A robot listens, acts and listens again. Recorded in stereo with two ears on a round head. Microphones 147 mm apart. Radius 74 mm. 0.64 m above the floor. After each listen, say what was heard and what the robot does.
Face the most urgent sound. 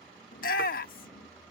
The shout: about 55° left or 125° left. Turn 55° left.
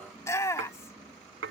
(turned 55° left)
So it is at 20° left. Turn 20° left.
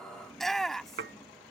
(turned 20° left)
Found it: a shout, straight ahead.